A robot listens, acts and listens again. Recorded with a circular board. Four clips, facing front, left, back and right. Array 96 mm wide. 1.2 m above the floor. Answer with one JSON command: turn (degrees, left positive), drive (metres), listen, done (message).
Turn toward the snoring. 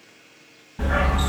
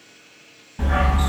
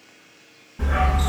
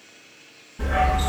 {"listen": true}
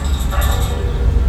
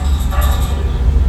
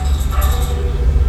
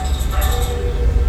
{"listen": true}
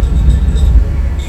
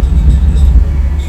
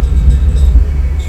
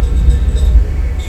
{"done": "I can't make out snoring to turn to."}